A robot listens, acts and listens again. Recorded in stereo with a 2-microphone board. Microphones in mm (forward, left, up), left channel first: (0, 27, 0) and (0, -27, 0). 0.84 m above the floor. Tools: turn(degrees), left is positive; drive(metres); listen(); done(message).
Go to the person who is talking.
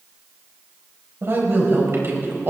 turn(degrees=-45)
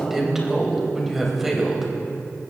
drive(metres=1.0)
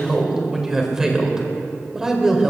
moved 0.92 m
turn(degrees=-10)
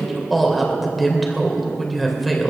drive(metres=1.0)
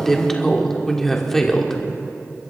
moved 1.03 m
turn(degrees=10)
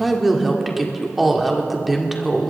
drive(metres=1.0)
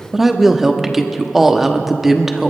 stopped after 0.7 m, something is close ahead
done("Arrived at the woman speaking, straight ahead.")